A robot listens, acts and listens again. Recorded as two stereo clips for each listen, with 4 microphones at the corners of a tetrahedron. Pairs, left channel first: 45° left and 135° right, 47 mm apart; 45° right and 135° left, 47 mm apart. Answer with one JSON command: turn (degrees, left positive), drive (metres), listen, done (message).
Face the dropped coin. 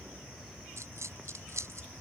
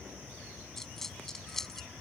{"turn": -125}
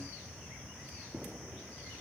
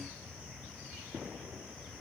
{"done": "I heard a dropped coin from this way, but can't make it out now."}